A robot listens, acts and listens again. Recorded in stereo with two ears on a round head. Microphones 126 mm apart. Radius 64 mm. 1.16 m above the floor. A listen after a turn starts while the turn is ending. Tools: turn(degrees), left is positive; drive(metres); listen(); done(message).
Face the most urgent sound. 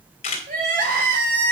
turn(degrees=-60)
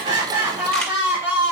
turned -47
turn(degrees=-15)
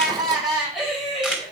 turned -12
done("Found it: crying, straight ahead, over 4 m away.")